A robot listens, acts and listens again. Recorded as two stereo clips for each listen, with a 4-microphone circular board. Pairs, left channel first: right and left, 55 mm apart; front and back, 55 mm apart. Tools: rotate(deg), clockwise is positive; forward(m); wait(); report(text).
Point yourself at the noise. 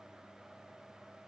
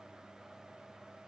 wait()
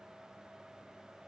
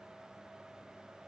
wait()
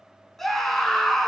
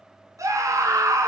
rotate(175)
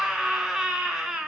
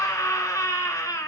rotate(-10)
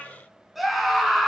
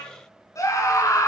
report("Found it: a scream, straight ahead.")